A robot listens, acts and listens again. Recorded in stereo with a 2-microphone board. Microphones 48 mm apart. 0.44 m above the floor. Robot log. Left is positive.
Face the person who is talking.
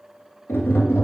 cmd idle
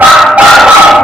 cmd idle
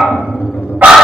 end: I can't make out anyone speaking, only a dog barking and tapping.